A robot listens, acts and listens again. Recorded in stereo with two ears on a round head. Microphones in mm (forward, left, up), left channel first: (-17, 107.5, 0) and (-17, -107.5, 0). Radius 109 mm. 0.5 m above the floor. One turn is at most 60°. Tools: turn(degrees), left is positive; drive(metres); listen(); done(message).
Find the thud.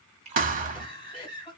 turn(degrees=-35)
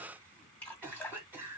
listen()
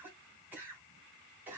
done("I heard a thud, but can't make it out now. It was about straight ahead or 110° right.")